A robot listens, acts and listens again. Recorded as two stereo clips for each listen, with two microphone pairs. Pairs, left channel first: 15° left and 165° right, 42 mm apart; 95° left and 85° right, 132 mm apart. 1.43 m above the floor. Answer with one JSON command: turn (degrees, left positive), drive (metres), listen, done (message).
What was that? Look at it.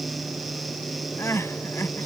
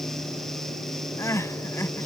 {"turn": 25}
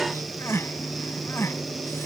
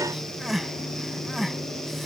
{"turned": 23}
{"done": "Facing the crying."}